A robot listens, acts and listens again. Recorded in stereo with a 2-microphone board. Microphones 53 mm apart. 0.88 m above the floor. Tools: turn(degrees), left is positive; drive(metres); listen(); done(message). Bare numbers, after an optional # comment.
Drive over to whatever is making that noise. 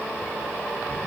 listen()
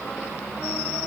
listen()
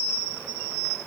done("I can't make out anything to turn to.")